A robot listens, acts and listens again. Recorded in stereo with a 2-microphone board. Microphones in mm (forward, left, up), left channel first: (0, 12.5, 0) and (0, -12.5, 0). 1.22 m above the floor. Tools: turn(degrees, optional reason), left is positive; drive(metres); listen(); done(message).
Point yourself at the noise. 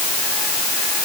listen()
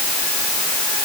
listen()
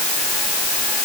done("I can't make out anything.")